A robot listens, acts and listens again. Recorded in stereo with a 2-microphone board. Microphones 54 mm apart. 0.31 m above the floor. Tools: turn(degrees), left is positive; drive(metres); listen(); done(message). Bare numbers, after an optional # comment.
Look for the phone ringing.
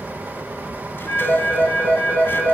# The phone ringing: about 35° left or 145° left.
turn(35)
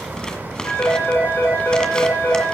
# So it is at 115° left.
turn(115)
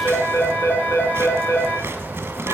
# The phone ringing is now 40° left.
turn(40)
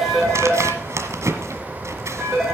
done("Facing the phone ringing, over 4 m away.")